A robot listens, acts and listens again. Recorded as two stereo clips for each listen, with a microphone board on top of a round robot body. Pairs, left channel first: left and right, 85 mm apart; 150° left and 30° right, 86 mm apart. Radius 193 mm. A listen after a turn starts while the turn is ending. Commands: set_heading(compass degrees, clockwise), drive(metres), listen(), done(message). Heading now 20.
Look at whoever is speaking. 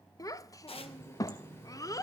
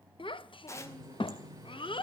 set_heading(240)
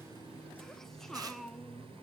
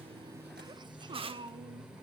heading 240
done("Facing the child speaking.")